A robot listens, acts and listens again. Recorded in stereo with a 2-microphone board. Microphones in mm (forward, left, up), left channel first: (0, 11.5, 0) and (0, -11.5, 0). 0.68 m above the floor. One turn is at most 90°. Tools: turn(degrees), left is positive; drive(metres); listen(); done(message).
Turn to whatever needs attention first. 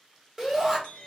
turn(degrees=-30)
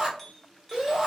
turn(degrees=-90)
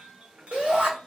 turn(degrees=-70)
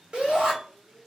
turn(degrees=-40)
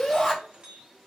turn(degrees=15)
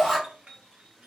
done("Found it: a shout, straight ahead.")